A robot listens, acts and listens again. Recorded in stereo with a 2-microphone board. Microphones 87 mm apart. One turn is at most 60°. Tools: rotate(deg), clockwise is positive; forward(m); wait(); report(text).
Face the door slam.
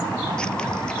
wait()
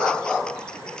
wait()
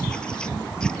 report("I can't make out a door slam to turn to.")